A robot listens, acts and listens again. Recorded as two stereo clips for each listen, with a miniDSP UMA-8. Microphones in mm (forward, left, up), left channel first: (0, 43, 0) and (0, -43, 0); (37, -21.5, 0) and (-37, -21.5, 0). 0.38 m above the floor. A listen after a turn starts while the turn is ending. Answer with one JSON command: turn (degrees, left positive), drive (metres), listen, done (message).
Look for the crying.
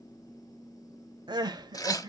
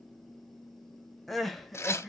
{"turn": -90}
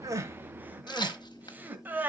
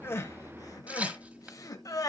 {"turn": -25}
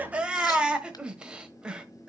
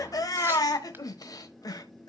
{"turn": -15}
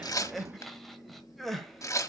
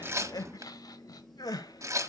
{"done": "Found it: crying, straight ahead, 1 to 2 m away."}